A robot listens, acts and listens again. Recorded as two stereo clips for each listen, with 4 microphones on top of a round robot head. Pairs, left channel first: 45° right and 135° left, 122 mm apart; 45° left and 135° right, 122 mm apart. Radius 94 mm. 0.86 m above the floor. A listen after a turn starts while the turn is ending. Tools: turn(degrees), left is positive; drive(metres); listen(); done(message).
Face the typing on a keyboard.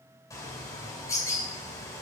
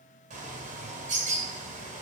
listen()
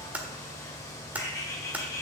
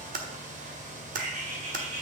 turn(degrees=-145)
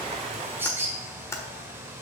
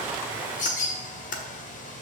listen()
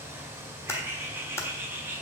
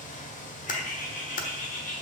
turn(degrees=25)
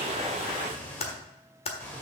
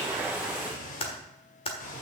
done("Found it: typing on a keyboard, straight ahead.")